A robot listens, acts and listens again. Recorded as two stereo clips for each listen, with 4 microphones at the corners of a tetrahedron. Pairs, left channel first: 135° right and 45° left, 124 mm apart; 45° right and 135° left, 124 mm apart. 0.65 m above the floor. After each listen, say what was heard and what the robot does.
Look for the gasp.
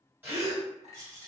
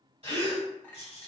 The gasp: 115° left. Turn 115° left.
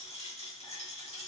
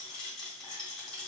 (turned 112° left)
I heard a gasp from this way, but can't make it out now.